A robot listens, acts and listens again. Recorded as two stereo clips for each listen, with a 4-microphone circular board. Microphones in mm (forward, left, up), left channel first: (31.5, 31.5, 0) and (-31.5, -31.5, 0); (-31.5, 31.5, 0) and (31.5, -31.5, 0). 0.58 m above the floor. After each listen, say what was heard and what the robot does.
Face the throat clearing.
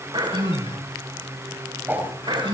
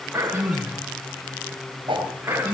The throat clearing: 110° right. Turn 110° right.
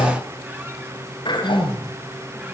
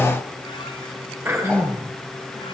The throat clearing is now 15° left. Turn 15° left.
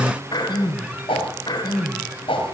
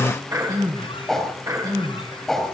Facing the throat clearing.